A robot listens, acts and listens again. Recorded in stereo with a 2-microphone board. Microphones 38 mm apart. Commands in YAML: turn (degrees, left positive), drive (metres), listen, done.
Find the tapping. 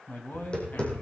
turn: 30
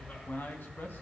listen: true
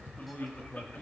done: "Found it: tapping, straight ahead."